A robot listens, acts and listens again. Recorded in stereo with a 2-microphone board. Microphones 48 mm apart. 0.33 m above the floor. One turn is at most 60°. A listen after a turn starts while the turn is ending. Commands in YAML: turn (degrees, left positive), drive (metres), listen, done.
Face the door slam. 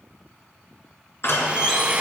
turn: 55
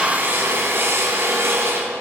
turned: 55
listen: true
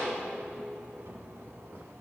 done: "I heard a door slam, but can't make it out now. It was about straight ahead or 70° left."